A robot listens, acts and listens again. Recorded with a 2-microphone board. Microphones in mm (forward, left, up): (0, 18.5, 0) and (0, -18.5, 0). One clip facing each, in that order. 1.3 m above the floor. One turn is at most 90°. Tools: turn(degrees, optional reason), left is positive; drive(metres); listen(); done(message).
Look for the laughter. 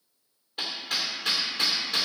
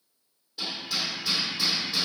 listen()
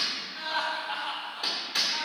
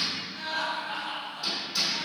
turn(degrees=30, reason="The laughter: about 30° left or 150° left.")
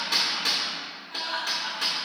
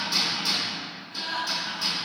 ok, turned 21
turn(degrees=90, reason="So it is at 125° left.")
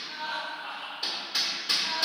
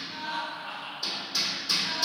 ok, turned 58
turn(degrees=65, reason="The laughter is now 65° left.")
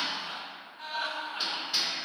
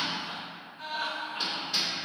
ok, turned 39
turn(degrees=25, reason="The laughter is now 25° left.")
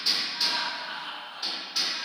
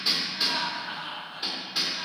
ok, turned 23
done("Facing the laughter, over 4 m away.")